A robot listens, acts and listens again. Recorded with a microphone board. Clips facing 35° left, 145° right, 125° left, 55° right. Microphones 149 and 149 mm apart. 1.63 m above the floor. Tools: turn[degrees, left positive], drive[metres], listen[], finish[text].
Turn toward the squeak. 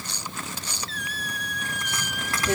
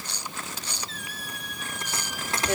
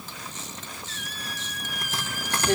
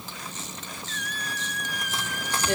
Thought: The squeak: 40° left.
Action: turn[40]
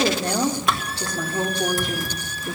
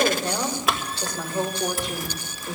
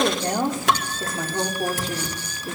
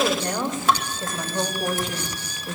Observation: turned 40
Action: listen[]
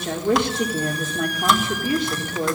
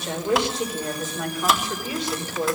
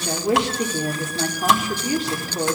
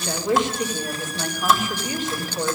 Action: listen[]
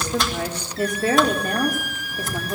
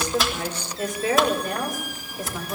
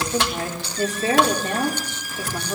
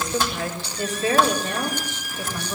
Thought: The squeak is now 20° left.
Action: turn[20]
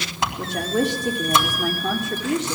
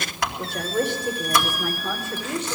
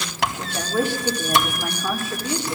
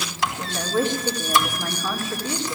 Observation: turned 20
Action: listen[]
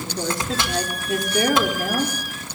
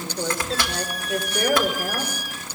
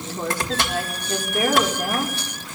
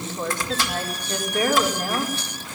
Action: listen[]
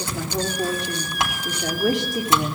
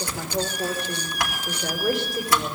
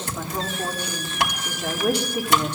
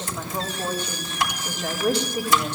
Action: finish[Facing where the squeak came from. I can't hear it now.]